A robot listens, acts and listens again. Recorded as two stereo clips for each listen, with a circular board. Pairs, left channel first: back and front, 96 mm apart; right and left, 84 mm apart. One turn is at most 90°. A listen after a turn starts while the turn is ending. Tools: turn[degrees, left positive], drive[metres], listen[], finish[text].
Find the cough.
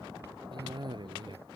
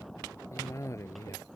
Thought: The cough: 40° right.
Action: turn[-40]
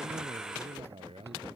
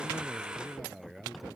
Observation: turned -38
Action: finish[Found it: a cough, straight ahead.]